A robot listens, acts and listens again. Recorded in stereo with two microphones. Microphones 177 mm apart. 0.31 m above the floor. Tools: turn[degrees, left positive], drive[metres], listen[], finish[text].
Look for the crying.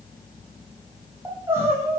Action: turn[-30]
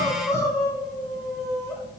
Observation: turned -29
Thought: So it is at 15° left.
Action: turn[15]
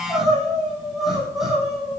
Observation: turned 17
Action: finish[Found it: crying, straight ahead, 2 to 4 m away.]